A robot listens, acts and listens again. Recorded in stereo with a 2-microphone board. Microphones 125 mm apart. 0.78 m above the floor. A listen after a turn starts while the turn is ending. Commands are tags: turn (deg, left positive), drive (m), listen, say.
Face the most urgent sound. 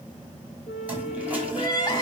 <turn deg="35"/>
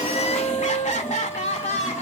<turn deg="110"/>
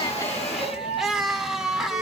<say>Facing the crying, 1 to 2 m away.</say>